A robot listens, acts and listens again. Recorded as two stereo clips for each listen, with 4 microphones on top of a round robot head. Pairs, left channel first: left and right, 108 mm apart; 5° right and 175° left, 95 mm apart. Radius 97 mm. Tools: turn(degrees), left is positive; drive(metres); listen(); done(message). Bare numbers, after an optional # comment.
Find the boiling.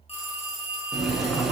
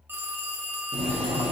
# The boiling: straight behind.
turn(180)
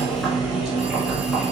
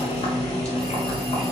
done("Found it: boiling, straight ahead.")